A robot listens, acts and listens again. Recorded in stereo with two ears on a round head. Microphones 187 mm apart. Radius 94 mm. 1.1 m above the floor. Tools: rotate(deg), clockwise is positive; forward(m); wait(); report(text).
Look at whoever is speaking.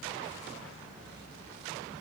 wait()
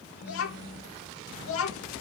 rotate(-75)
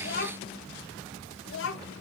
rotate(-65)
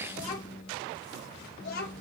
rotate(-45)
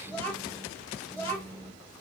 rotate(-10)
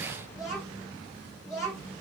report("Found it: a child speaking, straight ahead.")